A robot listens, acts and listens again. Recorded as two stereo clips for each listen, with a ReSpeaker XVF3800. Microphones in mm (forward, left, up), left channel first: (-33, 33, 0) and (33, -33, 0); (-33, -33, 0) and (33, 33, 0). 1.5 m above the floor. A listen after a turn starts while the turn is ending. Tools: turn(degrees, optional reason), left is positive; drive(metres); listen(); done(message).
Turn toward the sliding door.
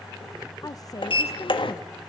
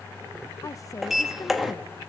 turn(degrees=135, reason="The sliding door: 135° left.")
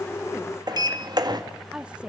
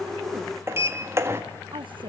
turn(degrees=-10, reason="The sliding door is now 10° right.")
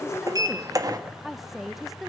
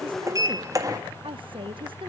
done("Facing the sliding door, 1 to 2 m away.")